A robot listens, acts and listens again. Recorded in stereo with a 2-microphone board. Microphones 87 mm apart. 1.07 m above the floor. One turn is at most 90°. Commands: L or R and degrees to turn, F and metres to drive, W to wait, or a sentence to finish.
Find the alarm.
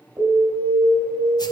R55
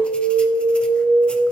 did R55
R75
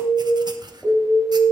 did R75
Found it: an alarm, straight ahead.